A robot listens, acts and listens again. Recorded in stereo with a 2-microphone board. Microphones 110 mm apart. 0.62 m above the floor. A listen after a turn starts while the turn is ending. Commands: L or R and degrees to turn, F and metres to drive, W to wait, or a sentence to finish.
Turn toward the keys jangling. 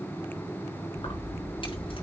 L55
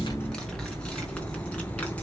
L10
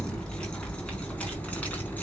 L15
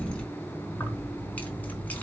L15
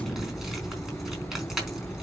Found it: keys jangling, straight ahead, over 4 m away.